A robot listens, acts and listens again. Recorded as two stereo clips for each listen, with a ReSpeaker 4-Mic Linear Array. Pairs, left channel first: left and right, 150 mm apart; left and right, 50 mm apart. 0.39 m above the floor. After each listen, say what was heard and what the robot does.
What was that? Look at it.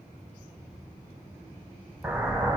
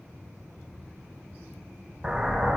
Turn 30° right.
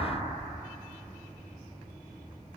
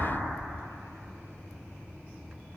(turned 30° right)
Keep listening.
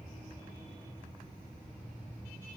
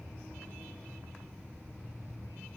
I heard an explosion, but can't make it out now. It was about 20° left or 140° right.